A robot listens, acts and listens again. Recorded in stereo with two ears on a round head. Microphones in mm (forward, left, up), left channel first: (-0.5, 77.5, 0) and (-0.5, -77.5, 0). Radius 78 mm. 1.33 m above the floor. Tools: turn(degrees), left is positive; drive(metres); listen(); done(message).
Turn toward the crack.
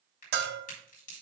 turn(degrees=45)
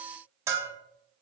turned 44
listen()
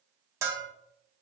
done("I heard a crack, but can't make it out now. It was about straight ahead or 90° left.")